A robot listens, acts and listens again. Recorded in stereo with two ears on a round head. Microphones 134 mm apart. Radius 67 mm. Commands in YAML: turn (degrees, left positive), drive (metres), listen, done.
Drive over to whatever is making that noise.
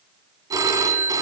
turn: -25
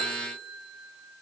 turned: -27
turn: -130
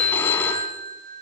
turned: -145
turn: 15
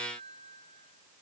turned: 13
listen: true
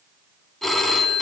drive: 1.0
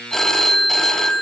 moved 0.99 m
drive: 1.0
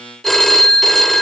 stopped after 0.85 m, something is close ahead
done: "Arrived at the phone ringing, straight ahead."